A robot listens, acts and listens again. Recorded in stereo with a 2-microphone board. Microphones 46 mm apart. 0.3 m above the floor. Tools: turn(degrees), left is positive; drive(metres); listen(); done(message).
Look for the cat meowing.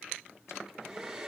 listen()
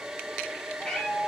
turn(degrees=15)
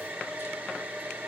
listen()
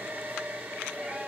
listen()
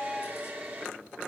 turn(degrees=-20)
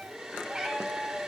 turn(degrees=-10)
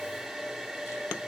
listen()
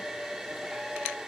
listen()
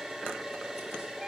done("Facing where the cat meowing came from. I can't hear it now.")